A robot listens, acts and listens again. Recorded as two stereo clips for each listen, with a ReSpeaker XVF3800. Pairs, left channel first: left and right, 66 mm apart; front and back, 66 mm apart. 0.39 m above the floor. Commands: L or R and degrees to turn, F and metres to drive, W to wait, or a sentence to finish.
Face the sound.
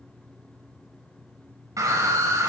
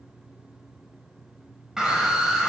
R100
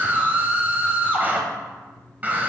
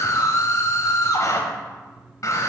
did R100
R30
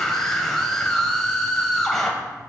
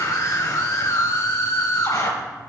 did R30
L10
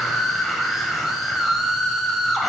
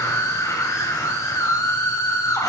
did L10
Facing the scream.